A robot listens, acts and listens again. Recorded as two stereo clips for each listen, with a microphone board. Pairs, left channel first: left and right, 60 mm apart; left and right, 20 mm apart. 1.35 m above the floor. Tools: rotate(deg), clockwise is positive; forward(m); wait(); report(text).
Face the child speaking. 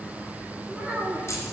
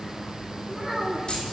rotate(25)
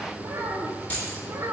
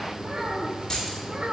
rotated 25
rotate(120)
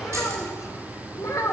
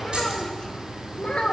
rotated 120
rotate(-70)
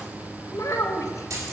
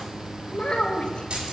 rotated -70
rotate(-65)
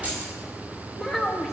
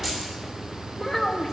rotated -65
report("Found it: a child speaking, straight ahead.")